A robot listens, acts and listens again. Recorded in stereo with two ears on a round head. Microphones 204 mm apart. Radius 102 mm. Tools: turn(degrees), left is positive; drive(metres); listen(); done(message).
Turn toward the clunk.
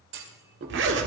turn(degrees=-60)
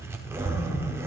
listen()
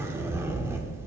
done("I heard a clunk, but can't make it out now. It was about straight ahead or 60° right.")